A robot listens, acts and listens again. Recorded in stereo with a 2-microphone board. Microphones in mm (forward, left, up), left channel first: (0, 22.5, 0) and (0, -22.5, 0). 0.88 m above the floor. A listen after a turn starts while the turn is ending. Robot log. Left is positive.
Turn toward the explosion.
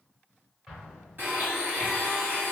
cmd yaw -30
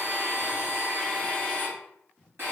cmd idle
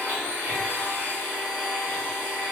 end: I heard an explosion, but can't make it out now. It was about 15° left or 135° right.